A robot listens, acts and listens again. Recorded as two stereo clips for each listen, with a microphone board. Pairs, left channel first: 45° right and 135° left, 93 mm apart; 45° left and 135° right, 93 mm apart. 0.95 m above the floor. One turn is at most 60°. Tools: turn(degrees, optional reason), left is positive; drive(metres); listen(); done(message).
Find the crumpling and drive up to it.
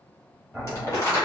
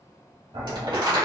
turn(degrees=-60, reason="The crumpling: 100° right.")
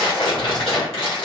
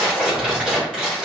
turn(degrees=-55, reason="The crumpling is now 55° right.")
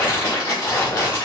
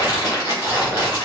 drive(metres=1.0)
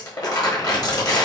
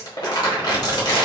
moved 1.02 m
drive(metres=1.0)
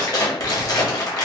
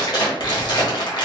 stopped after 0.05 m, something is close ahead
done("I am next to the crumpling.")